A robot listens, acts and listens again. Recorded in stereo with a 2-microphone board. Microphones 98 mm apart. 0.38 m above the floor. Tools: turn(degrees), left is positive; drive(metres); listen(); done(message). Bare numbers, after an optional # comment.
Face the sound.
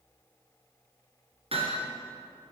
turn(-90)
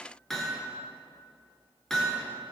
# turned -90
done("Facing the hammering.")